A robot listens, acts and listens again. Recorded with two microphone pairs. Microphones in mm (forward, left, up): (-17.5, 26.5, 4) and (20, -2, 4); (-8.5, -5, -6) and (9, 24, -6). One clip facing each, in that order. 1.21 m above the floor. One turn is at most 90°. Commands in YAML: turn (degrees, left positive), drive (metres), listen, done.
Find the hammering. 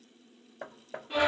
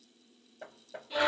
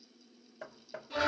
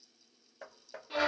turn: 90
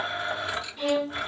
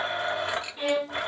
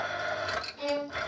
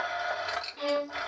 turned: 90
turn: 55
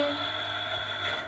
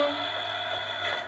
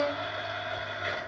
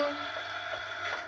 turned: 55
listen: true
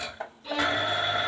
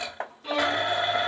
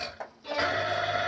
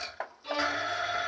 done: "Found it: hammering, straight ahead, under 1 m away."